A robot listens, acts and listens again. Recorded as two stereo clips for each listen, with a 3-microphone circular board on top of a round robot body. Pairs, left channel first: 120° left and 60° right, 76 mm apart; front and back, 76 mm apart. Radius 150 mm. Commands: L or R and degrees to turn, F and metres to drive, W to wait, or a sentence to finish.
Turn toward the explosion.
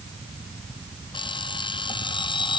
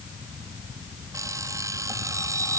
W
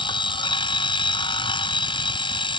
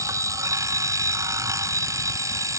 W
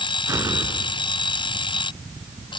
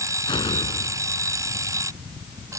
R10
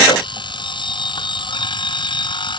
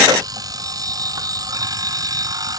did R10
I heard an explosion from this way, but can't make it out now.